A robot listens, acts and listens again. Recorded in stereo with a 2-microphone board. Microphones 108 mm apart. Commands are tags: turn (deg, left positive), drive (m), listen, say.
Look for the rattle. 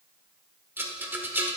<turn deg="-20"/>
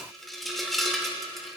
<say>Facing the rattle, under 1 m away.</say>